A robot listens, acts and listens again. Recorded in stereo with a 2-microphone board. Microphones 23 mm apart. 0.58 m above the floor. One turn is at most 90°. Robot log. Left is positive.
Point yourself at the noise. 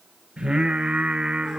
note: The singing: about 40° right or 140° right.
cmd yaw -40
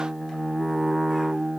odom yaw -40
end: Facing the singing, 2 to 4 m away.